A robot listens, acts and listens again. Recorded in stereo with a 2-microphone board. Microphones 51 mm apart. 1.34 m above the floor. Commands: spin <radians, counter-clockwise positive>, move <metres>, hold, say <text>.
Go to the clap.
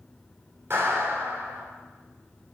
spin -0.96
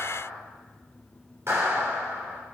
spin -1.13
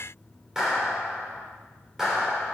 spin -0.17
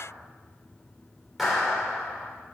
move 1.0
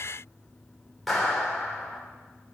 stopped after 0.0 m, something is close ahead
say Something is in my way. I am facing the clap but have not reached it.